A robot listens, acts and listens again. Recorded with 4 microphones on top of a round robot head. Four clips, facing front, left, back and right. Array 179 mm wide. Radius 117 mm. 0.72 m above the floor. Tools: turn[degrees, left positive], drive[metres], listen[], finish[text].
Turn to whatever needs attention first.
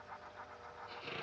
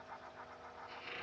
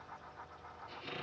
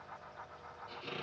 Action: listen[]
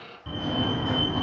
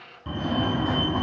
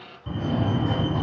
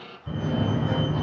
Thought: The fire alarm: 85° left.
Action: turn[85]
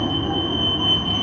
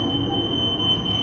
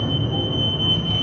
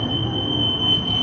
Action: finish[Found it: a fire alarm, straight ahead.]